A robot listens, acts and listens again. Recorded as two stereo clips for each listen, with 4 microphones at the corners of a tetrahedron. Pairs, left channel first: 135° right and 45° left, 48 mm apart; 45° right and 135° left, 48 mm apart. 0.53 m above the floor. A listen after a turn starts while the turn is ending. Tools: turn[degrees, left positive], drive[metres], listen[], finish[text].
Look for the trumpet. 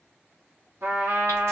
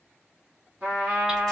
Thought: The trumpet: 70° left.
Action: turn[70]
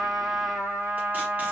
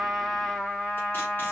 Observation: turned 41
Thought: The trumpet is now 30° left.
Action: turn[30]
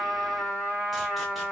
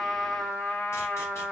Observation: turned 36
Thought: The trumpet is now 10° right.
Action: turn[-10]
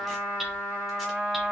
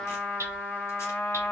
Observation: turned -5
Action: finish[Facing the trumpet, 1 to 2 m away.]